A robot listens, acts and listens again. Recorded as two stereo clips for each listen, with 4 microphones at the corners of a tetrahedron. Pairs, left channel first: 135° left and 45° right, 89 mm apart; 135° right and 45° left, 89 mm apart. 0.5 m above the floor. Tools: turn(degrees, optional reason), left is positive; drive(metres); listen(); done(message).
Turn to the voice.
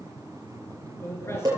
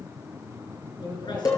turn(degrees=-165, reason="The man speaking: 165° right.")
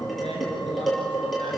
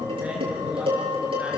listen()
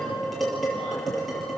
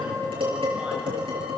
listen()
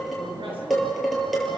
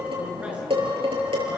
turn(degrees=-30, reason="The man speaking is now 30° right.")
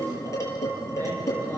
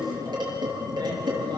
listen()
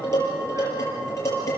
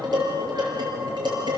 listen()
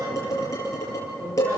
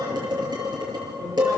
done("Facing where the man speaking came from. I can't hear it now.")